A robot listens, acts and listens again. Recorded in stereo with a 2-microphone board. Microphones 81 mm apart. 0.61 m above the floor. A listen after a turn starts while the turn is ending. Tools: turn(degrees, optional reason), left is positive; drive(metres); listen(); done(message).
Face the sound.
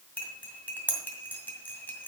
turn(degrees=20, reason="The cutlery clinking: about 20° left or 160° left.")
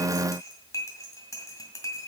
turn(degrees=140, reason="So it is at 140° left.")
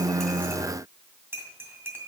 turn(degrees=-25, reason="The cutlery clinking is now 25° right.")
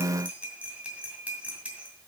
turn(degrees=-15, reason="The cutlery clinking is now 15° right.")
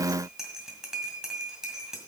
done("Facing the cutlery clinking, 2 to 4 m away.")